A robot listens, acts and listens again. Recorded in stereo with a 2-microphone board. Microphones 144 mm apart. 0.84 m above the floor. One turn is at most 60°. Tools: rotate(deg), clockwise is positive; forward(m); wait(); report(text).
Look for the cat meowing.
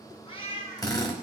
rotate(-45)
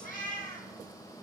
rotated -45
rotate(-60)
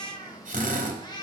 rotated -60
rotate(-30)
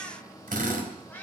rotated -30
rotate(-15)
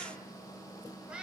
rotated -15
rotate(10)
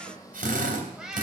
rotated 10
report("Facing the cat meowing, 1 to 2 m away.")